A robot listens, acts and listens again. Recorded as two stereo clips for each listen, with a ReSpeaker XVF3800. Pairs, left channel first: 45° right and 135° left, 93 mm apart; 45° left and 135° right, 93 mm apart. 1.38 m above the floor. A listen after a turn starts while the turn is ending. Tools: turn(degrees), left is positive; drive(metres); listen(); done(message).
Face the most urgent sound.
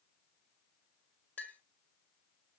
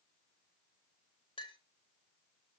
listen()
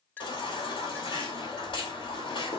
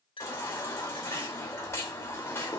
turn(degrees=-15)
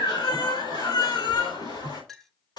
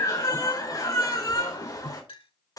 done("Found it: a baby crying, straight ahead, over 4 m away.")